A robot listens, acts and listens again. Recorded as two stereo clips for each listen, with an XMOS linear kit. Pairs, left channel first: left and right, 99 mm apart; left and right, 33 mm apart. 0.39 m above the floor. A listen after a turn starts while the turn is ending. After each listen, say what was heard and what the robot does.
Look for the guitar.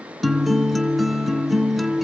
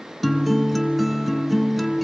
Turn 30° left.
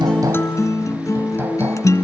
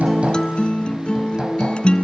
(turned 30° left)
So it is at 150° left. Turn 150° left.
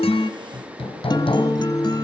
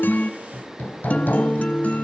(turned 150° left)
The guitar is now 45° left. Turn 45° left.
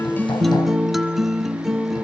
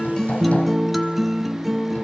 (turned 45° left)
Facing the guitar, 1 to 2 m away.